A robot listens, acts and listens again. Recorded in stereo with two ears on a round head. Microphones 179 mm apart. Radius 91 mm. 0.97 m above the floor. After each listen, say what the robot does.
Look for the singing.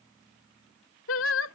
Turn 70° left.
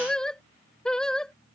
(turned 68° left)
Found it: singing, straight ahead.